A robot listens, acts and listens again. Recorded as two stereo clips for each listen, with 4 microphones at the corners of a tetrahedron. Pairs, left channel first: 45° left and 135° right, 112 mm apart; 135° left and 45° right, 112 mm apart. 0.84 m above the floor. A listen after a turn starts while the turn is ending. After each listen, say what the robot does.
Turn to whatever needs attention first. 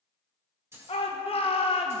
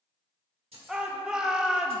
Turn 35° left.
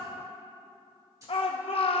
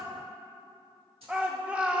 Turn 30° left.
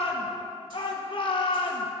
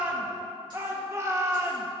Turn 15° left.
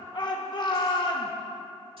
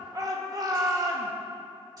Found it: a shout, straight ahead, under 1 m away.